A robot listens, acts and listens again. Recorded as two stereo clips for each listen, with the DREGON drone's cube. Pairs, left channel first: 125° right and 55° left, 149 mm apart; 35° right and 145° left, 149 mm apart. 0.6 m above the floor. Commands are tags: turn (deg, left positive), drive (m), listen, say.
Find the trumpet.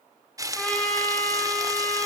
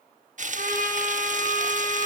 <turn deg="150"/>
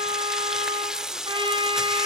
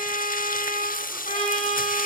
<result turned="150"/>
<say>Found it: a trumpet, straight ahead, over 4 m away.</say>